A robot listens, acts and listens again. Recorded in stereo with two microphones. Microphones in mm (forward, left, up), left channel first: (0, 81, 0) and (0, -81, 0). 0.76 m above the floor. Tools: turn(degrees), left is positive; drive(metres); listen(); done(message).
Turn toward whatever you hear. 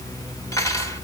turn(degrees=20)
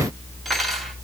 done("Facing the cutlery clinking, 2 to 4 m away.")